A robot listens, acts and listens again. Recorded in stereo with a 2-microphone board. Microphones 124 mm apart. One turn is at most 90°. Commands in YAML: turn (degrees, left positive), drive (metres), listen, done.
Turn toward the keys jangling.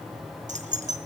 turn: -90
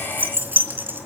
turn: -15
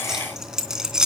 done: "Found it: keys jangling, straight ahead."